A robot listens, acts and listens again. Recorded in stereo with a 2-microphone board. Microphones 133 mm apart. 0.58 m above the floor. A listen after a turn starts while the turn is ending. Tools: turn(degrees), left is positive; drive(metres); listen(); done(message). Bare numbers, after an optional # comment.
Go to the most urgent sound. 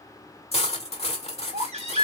# The baby crying: about 55° right or 125° right.
turn(-55)
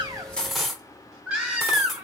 # So it is at 10° right.
turn(-10)
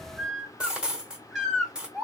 drive(1.0)
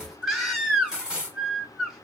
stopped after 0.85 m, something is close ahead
done("Arrived at the baby crying, straight ahead.")